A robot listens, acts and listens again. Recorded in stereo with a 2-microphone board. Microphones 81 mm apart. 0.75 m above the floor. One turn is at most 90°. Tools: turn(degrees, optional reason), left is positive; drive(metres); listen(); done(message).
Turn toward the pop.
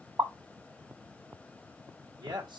turn(degrees=-40, reason="The pop: about 40° right or 140° right.")
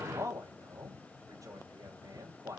listen()
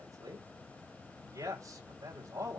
done("I heard a pop, but can't make it out now. It was about straight ahead or 100° right.")